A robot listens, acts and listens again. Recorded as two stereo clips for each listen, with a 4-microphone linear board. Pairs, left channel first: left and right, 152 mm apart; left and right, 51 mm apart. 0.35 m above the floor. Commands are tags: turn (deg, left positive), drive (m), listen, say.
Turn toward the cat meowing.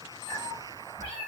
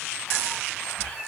<turn deg="30"/>
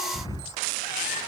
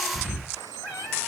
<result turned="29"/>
<turn deg="120"/>
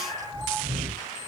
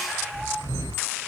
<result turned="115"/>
<say>Found it: a cat meowing, straight ahead.</say>